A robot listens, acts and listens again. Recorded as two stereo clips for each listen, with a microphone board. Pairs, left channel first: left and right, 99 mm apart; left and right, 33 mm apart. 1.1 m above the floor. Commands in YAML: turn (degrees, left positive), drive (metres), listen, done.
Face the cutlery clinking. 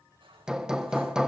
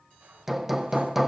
turn: -55
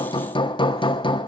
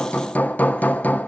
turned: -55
listen: true
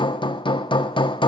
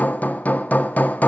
listen: true
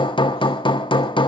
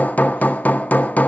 done: "I heard cutlery clinking, but can't make it out now. It was about straight ahead or 70° right."